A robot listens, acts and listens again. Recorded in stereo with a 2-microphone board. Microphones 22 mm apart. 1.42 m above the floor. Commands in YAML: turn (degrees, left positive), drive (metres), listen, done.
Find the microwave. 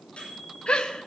turn: 90
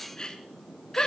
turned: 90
listen: true
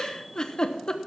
listen: true
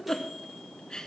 done: "I heard a microwave from this way, but can't make it out now."